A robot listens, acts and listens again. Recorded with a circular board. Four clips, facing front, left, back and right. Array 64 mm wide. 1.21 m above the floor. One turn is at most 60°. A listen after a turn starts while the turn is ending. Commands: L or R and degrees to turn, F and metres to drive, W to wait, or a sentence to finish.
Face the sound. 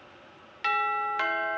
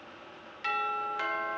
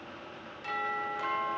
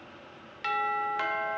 R20
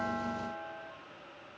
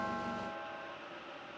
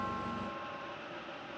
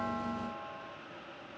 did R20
Found it: a doorbell, straight ahead.